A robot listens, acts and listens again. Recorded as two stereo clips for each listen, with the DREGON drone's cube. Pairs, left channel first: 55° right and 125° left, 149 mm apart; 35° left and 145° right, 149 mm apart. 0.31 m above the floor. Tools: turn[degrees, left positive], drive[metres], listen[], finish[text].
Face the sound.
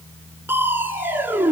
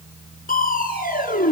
Thought: The crushing: 50° left.
Action: turn[50]
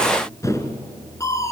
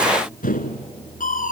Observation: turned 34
Thought: The crushing is now 15° left.
Action: turn[15]
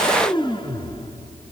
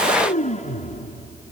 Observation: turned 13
Action: finish[Found it: crushing, straight ahead.]